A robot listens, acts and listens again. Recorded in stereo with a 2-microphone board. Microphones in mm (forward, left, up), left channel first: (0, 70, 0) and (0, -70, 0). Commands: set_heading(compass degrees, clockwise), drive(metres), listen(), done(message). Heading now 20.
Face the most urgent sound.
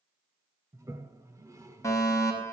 set_heading(0)
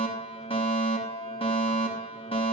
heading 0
set_heading(225)
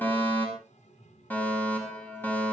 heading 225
set_heading(210)
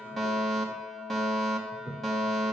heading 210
done("Facing the fire alarm.")